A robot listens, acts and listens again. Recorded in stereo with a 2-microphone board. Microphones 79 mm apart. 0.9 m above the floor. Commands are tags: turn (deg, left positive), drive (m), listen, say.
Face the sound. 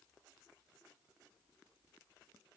<listen/>
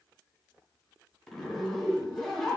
<turn deg="30"/>
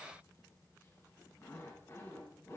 <turn deg="145"/>
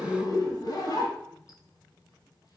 <turn deg="50"/>
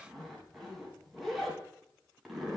<say>Found it: a zipper, straight ahead.</say>